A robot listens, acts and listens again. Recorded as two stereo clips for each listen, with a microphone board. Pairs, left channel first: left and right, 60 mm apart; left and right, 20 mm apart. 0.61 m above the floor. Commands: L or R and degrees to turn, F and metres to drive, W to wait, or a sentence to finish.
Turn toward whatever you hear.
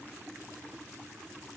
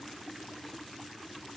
W
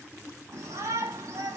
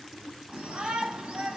R70
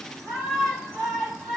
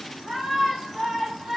Facing the shout.